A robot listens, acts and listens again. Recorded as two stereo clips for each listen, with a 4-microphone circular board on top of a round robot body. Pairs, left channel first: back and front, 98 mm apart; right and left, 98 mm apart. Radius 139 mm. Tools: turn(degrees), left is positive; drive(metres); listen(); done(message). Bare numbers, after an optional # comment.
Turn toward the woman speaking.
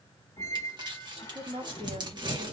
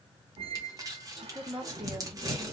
# The woman speaking: 10° left.
turn(10)
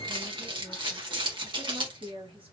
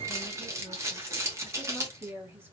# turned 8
# The woman speaking is now 25° left.
turn(25)
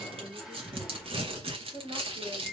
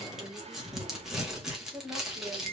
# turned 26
done("Found it: a woman speaking, straight ahead, 2 to 4 m away.")